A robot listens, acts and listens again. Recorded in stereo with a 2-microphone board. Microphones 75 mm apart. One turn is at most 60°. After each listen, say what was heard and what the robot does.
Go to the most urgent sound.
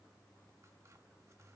Keep listening.
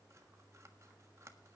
Keep listening.
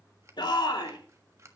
Turn 60° left.
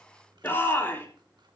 So it is at 30° left. Turn 30° left.
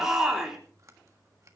Drive 1.0 m forward.
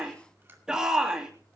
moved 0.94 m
The shout is now 10° right. Turn 10° right.
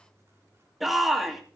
Drive 1.0 m forward.
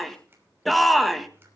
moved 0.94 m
Drive 1.0 m forward.
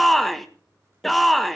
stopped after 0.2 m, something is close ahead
Arrived at the shout, straight ahead.